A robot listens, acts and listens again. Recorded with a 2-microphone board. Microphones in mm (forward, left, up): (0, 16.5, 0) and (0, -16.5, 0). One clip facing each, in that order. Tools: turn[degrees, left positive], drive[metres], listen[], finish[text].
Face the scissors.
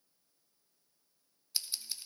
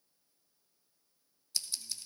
Thought: The scissors: about 20° left or 160° left.
Action: turn[20]
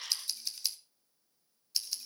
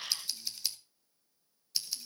Action: finish[Found it: scissors, straight ahead.]